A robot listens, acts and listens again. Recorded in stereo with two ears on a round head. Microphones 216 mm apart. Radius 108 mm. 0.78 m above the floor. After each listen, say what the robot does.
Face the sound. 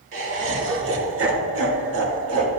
Turn 60° right.
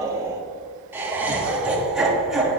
Facing the laughter, 2 to 4 m away.